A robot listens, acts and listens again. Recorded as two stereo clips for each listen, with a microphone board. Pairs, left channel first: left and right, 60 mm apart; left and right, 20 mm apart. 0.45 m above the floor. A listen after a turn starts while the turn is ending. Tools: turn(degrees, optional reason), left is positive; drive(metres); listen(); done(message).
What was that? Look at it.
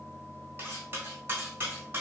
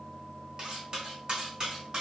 turn(degrees=-35, reason="The cutlery clinking: about 35° right or 145° right.")
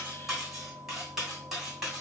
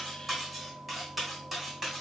done("Found it: cutlery clinking, straight ahead.")